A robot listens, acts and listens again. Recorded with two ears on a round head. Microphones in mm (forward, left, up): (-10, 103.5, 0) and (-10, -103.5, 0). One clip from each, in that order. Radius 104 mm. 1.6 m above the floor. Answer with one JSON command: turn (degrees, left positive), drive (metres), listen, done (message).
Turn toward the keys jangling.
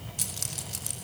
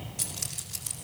{"turn": 15}
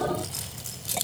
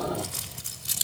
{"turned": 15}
{"turn": -30}
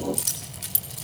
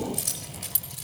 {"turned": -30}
{"turn": 20}
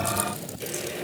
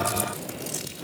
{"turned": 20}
{"listen": true}
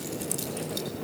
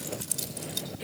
{"done": "Found it: keys jangling, straight ahead."}